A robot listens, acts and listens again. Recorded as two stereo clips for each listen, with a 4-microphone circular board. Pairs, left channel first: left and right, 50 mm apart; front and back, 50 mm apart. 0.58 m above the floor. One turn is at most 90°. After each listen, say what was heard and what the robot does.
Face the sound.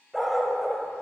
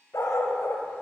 Facing the dog barking, under 1 m away.